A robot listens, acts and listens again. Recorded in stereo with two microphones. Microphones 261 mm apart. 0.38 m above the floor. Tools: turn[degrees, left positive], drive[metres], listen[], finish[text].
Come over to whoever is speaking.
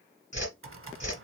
Action: listen[]
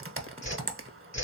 Action: listen[]
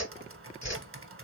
Action: finish[I can't make out anyone speaking, only a whoosh and typing on a keyboard.]